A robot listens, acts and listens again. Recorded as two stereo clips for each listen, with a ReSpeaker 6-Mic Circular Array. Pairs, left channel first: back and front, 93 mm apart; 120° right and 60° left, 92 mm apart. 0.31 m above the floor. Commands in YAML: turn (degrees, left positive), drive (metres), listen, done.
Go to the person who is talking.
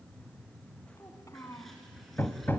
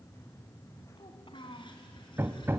turn: -130
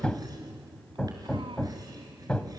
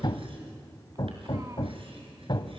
listen: true
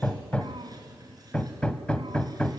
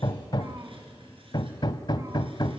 listen: true
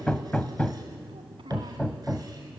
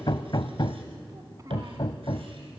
done: "Facing where the child speaking came from. I can't hear it now. I did not reach it."